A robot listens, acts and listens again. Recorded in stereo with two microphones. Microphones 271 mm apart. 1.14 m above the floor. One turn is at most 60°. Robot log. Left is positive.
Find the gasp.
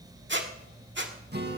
cmd idle
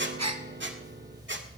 note: The gasp: about 70° right or 110° right.
cmd yaw -60
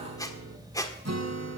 cmd idle
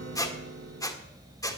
end: I heard a gasp, but can't make it out now. It was about 10° right or 50° right.